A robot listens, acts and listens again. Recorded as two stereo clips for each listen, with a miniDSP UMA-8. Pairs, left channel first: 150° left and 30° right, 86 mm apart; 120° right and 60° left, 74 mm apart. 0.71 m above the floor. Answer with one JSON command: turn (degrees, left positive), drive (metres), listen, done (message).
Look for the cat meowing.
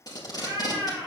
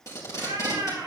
{"turn": 25}
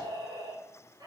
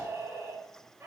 {"turn": 10}
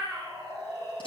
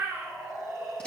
{"done": "Found it: a cat meowing, straight ahead, 2 to 4 m away."}